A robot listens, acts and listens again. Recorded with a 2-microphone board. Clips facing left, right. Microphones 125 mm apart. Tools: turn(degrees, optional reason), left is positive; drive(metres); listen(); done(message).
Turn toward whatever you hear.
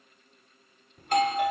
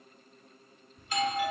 turn(degrees=55, reason="The doorbell: about 55° left or 125° left.")
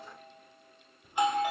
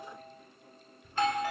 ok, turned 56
turn(degrees=20, reason="So it is at 20° left.")
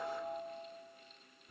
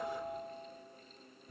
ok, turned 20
done("Facing the doorbell.")